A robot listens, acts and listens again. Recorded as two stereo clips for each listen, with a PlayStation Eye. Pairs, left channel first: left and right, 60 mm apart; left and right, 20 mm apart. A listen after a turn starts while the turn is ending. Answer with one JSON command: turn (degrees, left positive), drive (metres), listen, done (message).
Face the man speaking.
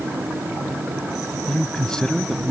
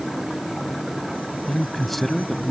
{"turn": 30}
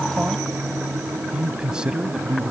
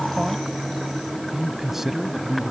{"turn": -15}
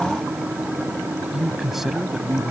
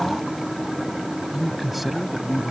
{"done": "Found it: a man speaking, straight ahead."}